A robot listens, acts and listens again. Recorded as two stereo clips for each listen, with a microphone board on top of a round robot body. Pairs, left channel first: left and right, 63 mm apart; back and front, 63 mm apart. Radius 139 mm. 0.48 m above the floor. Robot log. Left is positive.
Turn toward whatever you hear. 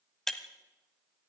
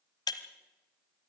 note: The breaking glass: 175° left.
cmd yaw +175
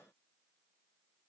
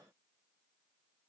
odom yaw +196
note: Nothing new. It was at 25° right.
cmd yaw -25
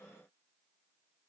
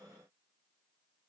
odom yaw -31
note: Nothing new. It was at 10° left.
cmd yaw +10
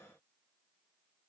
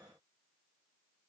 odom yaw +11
end: Facing where the breaking glass came from. I can't hear it now.